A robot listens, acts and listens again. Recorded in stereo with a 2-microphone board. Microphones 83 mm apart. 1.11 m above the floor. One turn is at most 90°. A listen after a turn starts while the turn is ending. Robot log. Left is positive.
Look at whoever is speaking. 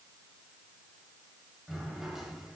cmd idle
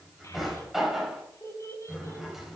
note: The child speaking: about 40° left or 140° left.
cmd yaw +40
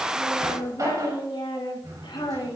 note: So it is at 100° left.
cmd yaw +90
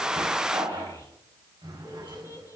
note: The child speaking is now 45° left.
cmd yaw +45
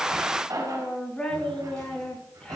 note: The child speaking is now 15° left.
cmd yaw +15
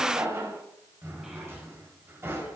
cmd idle
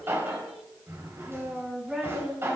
end: Facing the child speaking, over 4 m away.